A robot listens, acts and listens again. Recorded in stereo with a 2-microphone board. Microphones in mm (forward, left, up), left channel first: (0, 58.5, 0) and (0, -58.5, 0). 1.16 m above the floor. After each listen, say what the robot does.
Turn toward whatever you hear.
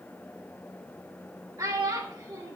Turn 35° right.
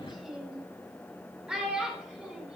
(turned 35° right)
Found it: a child speaking, straight ahead.